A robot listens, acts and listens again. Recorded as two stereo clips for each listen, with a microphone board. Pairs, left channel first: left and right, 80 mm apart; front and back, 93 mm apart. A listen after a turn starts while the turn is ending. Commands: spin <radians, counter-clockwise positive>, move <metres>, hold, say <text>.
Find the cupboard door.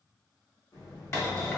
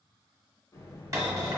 spin 2.36
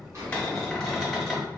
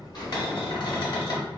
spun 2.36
say Facing the cupboard door.